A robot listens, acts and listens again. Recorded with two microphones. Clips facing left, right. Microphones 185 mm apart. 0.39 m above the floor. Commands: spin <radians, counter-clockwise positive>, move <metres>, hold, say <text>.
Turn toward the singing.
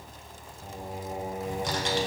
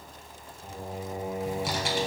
spin 1.22
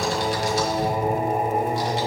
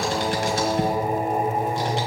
spin 0.35
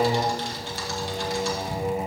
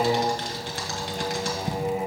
say Found it: singing, straight ahead.